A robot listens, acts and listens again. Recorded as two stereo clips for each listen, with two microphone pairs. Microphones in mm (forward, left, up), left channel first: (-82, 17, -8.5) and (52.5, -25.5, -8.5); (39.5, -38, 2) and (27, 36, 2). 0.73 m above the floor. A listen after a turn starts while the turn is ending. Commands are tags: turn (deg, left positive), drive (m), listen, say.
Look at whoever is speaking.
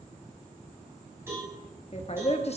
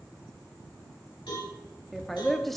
<turn deg="-165"/>
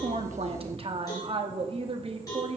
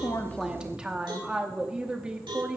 <turn deg="25"/>
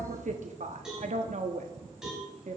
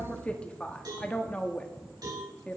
<say>Facing the woman speaking.</say>